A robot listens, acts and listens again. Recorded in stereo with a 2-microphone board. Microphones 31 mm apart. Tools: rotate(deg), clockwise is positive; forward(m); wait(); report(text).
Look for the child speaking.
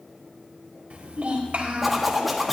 rotate(55)
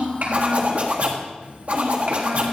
rotate(60)
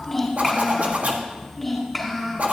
report("Facing the child speaking.")